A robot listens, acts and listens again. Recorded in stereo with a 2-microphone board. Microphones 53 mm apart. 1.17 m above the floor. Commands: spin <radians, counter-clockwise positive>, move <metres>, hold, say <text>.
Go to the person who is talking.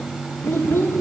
spin 0.87
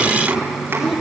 hold
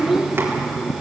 move 1.0
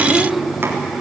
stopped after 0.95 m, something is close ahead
say I am next to the child speaking.